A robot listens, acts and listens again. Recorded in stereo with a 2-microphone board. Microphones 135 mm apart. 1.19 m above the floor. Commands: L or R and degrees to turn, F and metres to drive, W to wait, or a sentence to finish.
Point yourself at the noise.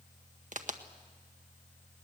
R70
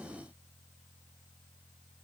W
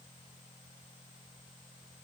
I heard a crack, but can't make it out now. It was about straight ahead or 40° right.